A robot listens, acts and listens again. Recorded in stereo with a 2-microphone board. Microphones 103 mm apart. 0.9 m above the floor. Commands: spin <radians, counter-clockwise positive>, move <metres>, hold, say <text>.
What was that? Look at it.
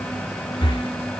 spin 0.96
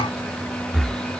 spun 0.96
say Found it: breathing, straight ahead.